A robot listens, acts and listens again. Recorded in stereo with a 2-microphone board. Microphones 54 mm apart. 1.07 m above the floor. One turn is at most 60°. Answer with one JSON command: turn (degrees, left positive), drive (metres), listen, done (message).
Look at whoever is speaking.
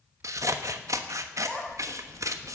{"turn": 15}
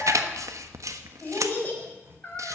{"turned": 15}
{"turn": 60}
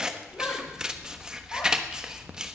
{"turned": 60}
{"turn": 60}
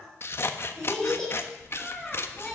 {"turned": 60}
{"turn": 10}
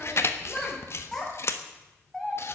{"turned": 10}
{"done": "Facing the child speaking, over 4 m away."}